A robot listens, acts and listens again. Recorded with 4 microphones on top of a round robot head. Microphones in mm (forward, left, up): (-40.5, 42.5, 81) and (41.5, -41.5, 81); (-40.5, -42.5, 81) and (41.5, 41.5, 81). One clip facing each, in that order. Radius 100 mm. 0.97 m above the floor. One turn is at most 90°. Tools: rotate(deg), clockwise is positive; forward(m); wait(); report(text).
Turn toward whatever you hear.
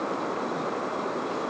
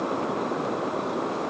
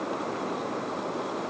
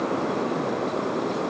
wait()
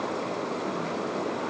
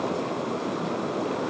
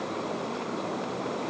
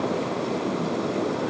wait()
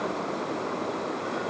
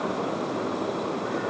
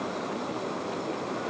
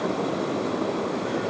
report("I can't make out anything.")